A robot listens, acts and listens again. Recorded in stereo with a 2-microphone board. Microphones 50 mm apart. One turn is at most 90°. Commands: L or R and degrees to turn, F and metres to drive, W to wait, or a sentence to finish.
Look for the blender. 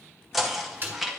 W
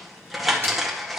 W
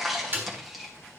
I can't make out a blender to turn to.